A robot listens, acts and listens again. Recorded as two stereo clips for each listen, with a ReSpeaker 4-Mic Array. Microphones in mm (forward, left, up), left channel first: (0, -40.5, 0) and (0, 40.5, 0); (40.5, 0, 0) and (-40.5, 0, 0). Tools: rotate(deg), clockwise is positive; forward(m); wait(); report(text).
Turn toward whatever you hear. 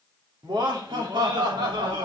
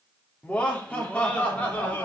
rotate(-70)
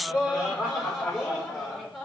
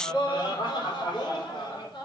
report("Facing the laughter, over 4 m away.")